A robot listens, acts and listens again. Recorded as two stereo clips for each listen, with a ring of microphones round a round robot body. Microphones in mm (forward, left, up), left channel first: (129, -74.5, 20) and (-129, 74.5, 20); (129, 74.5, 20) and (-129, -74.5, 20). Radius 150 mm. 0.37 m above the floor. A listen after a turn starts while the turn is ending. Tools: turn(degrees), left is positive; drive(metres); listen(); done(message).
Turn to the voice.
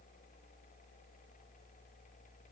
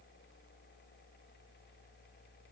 listen()
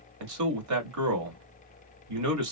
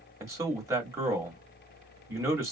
turn(degrees=130)
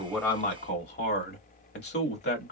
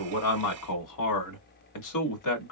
turn(degrees=20)
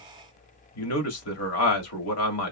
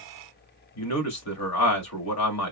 done("Facing the man speaking.")